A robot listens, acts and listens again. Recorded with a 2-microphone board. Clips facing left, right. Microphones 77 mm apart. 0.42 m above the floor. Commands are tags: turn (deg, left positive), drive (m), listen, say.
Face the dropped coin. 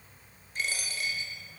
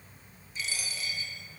<turn deg="50"/>
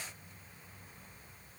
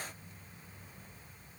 <listen/>
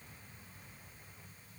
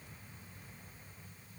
<say>I heard a dropped coin, but can't make it out now. It was about straight ahead or 80° left.</say>